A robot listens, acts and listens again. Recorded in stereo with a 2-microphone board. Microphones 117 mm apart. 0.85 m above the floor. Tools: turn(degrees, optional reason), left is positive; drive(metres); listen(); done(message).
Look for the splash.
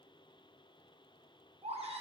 listen()
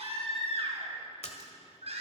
turn(degrees=65, reason="The splash: about 65° left or 115° left.")
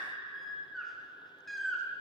listen()
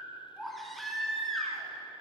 done("I heard a splash, but can't make it out now. It was about straight ahead or 50° left.")